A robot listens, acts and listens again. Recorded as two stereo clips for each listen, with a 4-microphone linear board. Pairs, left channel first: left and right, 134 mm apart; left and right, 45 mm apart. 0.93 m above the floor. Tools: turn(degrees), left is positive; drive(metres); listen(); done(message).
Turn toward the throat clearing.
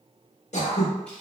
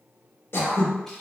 turn(degrees=60)
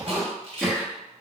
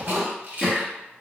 done("Facing the throat clearing, under 1 m away.")